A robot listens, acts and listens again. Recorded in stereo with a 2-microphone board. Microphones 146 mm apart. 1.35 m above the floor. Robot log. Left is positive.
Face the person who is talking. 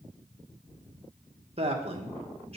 note: The man speaking: about 45° right or 135° right.
cmd yaw -45
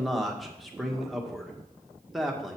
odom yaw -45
end: Found it: a man speaking, straight ahead, 1 to 2 m away.